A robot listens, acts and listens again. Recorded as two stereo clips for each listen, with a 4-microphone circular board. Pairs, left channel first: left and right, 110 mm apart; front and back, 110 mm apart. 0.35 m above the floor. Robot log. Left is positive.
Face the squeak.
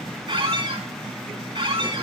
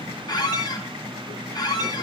note: The squeak: 50° right.
cmd yaw -50
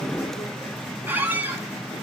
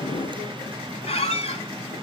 note: The squeak is now 15° right.
cmd yaw -15
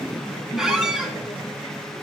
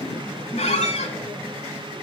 end: Found it: a squeak, straight ahead.